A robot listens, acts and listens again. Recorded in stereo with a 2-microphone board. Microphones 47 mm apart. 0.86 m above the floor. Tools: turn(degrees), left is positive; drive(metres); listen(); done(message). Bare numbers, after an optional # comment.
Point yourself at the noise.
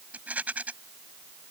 # The rattle: about 30° right or 150° right.
turn(-30)
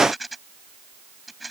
done("Found it: a rattle, straight ahead.")